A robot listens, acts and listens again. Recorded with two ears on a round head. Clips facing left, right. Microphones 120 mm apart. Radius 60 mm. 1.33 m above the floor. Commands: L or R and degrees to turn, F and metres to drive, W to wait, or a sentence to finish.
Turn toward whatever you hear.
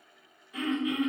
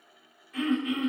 L30
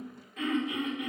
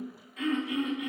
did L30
L135
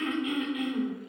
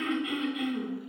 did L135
Found it: throat clearing, straight ahead.